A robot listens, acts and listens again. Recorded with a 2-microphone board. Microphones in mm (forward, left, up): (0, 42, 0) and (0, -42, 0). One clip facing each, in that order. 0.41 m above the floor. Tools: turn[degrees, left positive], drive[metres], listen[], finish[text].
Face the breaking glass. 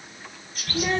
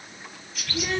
Action: listen[]
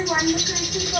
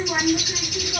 Action: listen[]
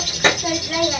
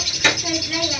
Action: finish[I can't make out breaking glass to turn to.]